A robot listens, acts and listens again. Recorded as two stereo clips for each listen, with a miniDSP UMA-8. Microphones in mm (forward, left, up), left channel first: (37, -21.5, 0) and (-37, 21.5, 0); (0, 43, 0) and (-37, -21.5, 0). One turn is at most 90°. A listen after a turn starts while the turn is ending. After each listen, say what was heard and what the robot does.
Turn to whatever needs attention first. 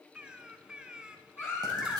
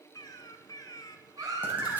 The baby crying: 90° right. Turn 90° right.
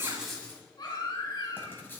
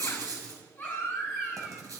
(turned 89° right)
Found it: a baby crying, straight ahead.